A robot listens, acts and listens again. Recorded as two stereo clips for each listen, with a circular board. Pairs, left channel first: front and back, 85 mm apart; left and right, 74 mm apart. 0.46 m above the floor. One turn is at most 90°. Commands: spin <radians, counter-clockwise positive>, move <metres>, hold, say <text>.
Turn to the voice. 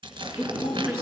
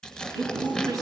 spin -1.57
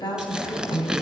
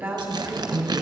spin -0.44
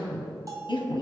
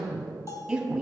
say Facing the woman speaking.